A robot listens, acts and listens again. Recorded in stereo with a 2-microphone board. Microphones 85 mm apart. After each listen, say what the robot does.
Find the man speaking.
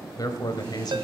Turn 55° left.
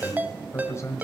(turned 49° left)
Turn 35° left.
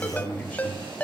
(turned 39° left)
Turn 20° left.
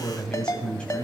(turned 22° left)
Turn 15° left.
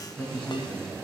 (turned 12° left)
Turn 10° left.
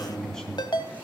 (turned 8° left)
Found it: a man speaking, straight ahead, 2 to 4 m away.